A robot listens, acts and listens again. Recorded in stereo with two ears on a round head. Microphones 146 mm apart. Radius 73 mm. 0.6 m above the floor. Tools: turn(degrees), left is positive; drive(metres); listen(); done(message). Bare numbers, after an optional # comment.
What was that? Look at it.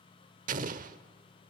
# The explosion: about 55° right or 125° right.
turn(-55)
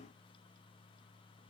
listen()
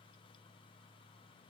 done("I heard an explosion, but can't make it out now. It was about straight ahead or 70° right.")